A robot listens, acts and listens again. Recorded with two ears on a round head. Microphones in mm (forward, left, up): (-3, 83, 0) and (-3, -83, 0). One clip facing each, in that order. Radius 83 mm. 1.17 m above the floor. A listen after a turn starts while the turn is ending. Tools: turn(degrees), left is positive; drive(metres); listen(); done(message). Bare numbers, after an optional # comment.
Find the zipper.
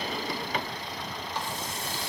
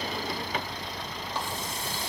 listen()
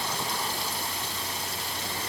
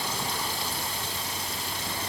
listen()
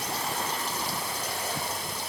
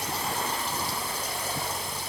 done("I can't make out a zipper.")